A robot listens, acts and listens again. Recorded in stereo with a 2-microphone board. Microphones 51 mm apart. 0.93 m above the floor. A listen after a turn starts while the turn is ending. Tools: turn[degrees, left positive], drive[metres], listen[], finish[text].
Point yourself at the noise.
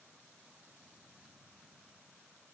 Action: listen[]
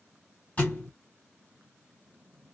Thought: The thud: about 30° left or 150° left.
Action: turn[30]
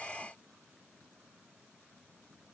Action: listen[]
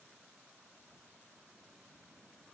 Action: finish[I heard a thud, but can't make it out now. It was about straight ahead or 120° left.]